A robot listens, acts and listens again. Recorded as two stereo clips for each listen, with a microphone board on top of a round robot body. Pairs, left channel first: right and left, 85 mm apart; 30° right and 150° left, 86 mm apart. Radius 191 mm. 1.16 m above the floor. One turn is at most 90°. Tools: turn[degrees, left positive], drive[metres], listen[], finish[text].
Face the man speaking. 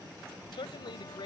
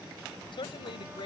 Thought: The man speaking: 60° right.
Action: turn[-60]
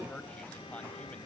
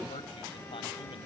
Action: listen[]
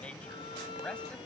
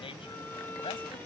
Thought: The man speaking is now 10° right.
Action: turn[-10]
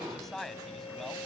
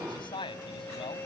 Action: finish[Found it: a man speaking, straight ahead.]